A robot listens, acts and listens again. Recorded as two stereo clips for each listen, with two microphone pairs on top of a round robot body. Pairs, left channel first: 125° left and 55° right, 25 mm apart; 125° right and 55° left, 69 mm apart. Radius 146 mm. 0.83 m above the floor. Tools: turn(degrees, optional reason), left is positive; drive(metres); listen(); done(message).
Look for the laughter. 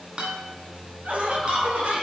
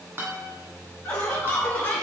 turn(degrees=-55, reason="The laughter: 55° right.")
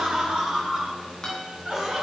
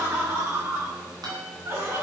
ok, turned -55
turn(degrees=10, reason="The laughter is now 10° left.")
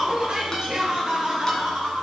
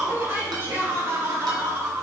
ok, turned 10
done("Facing the laughter.")